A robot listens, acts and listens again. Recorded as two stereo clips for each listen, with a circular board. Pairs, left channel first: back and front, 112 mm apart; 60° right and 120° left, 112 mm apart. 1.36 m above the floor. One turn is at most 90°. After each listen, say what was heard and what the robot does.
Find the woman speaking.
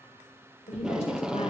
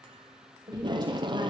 The woman speaking: 170° left. Turn 90° left.
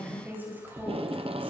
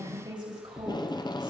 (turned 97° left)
The woman speaking is now 70° left. Turn 70° left.
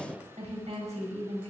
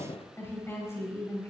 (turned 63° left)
Found it: a woman speaking, straight ahead.